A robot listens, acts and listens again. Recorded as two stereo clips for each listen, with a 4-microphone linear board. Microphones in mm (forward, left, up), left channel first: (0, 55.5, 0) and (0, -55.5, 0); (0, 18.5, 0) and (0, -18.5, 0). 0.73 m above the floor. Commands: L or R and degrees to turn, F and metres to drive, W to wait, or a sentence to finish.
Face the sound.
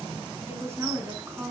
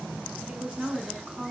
R25
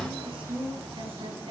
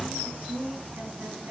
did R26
R125
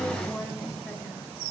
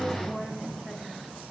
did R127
W
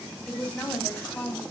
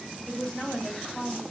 L20
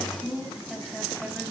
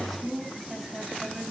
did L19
Facing the woman speaking, 2 to 4 m away.